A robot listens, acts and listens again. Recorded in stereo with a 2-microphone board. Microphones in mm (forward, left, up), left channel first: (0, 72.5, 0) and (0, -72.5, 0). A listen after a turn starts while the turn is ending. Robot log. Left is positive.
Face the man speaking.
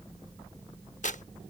cmd idle
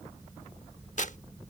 cmd idle
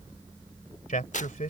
note: The man speaking: about 65° left or 115° left.
cmd yaw +65
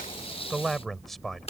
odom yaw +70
end: Found it: a man speaking, straight ahead.